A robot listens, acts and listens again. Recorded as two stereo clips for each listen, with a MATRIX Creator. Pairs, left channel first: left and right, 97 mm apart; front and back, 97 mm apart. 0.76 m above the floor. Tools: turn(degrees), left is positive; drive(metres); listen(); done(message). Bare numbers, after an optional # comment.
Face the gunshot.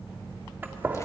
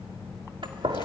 # The gunshot: 155° right.
turn(-155)
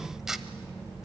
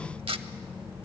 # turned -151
done("Facing where the gunshot came from. I can't hear it now.")